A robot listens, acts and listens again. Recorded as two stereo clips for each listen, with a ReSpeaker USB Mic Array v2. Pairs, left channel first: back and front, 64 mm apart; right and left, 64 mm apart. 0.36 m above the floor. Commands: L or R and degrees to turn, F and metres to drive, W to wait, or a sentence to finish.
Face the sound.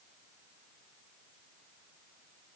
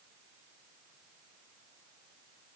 W
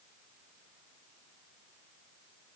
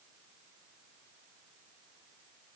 W
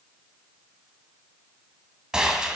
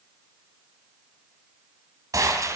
L75
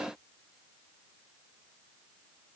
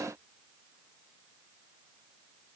I heard a gunshot from this way, but can't make it out now.